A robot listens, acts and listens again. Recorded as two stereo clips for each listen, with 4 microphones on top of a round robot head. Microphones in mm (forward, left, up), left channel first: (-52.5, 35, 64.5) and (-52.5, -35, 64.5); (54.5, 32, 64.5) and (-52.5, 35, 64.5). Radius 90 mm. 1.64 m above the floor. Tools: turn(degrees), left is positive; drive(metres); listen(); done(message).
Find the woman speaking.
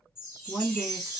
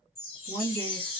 turn(degrees=-160)
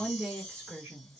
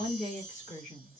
turn(degrees=-15)
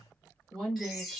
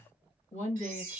done("Facing the woman speaking, 1 to 2 m away.")